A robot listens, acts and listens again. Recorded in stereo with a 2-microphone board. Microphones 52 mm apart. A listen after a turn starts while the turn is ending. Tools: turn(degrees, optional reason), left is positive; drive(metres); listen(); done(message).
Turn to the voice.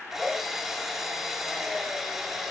listen()
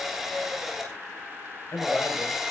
turn(degrees=70, reason="The man speaking: about 70° left or 110° left.")
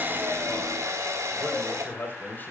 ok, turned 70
turn(degrees=35, reason="So it is at 35° left.")
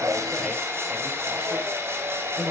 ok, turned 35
done("Found it: a man speaking, straight ahead.")